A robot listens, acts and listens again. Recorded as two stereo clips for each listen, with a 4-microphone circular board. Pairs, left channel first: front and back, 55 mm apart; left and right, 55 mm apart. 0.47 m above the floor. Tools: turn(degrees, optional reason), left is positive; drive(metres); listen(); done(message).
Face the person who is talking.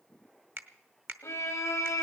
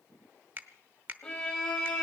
listen()
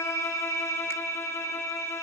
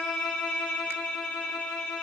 listen()
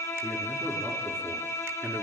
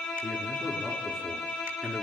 turn(degrees=175, reason="The man speaking: 175° left.")
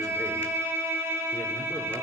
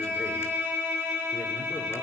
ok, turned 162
turn(degrees=10, reason="Nothing new. It was at 10° left.")
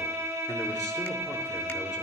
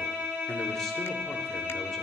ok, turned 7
listen()
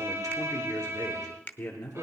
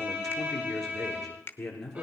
done("Facing the man speaking, over 4 m away.")